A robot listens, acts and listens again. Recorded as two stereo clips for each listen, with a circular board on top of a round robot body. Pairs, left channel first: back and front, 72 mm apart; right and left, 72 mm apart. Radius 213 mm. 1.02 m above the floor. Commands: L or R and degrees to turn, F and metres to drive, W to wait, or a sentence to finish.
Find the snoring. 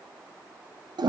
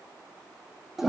W
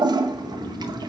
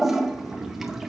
L165
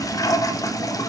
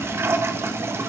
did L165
R55
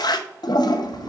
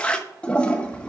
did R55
Found it: snoring, straight ahead, under 1 m away.